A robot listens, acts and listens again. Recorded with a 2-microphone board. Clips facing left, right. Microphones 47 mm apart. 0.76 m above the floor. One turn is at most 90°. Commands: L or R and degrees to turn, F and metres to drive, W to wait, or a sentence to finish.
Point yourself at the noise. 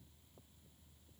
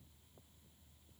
W
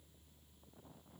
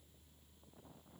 W
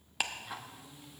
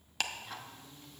L30
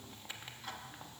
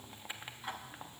R25
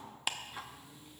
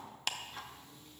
L15
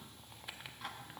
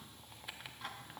Facing the ticking, under 1 m away.